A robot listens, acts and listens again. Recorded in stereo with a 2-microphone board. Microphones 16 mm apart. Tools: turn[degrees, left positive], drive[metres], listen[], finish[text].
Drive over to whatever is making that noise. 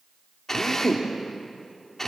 Thought: The drill: about 20° left or 160° left.
Action: turn[20]
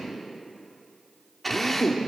Action: drive[1.0]
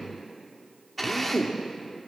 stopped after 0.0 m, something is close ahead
Action: finish[Blocked. The drill is further on, straight ahead.]